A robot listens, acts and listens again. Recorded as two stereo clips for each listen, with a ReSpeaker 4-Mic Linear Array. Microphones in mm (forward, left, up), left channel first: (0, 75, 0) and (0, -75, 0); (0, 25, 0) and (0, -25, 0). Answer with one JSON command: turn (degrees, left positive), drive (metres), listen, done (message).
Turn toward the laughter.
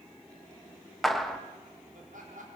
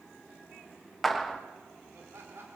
{"turn": -60}
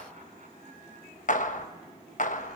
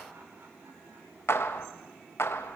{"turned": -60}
{"listen": true}
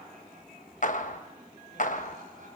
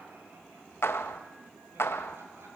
{"turn": -60}
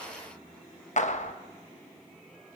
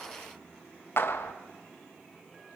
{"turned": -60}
{"listen": true}
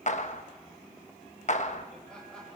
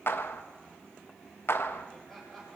{"done": "Facing the laughter."}